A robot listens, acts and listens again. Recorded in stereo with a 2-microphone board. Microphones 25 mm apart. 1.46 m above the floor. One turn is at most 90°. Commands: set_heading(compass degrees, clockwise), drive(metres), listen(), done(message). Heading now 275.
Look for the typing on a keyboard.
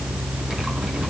listen()
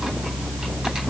listen()
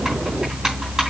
done("I can't make out typing on a keyboard to turn to.")